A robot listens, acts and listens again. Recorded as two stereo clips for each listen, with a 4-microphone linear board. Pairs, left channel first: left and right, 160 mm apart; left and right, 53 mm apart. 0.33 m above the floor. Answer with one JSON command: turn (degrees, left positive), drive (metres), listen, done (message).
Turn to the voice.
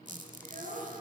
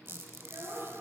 {"turn": -60}
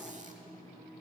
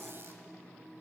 {"listen": true}
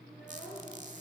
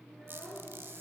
{"done": "Found it: a child speaking, straight ahead."}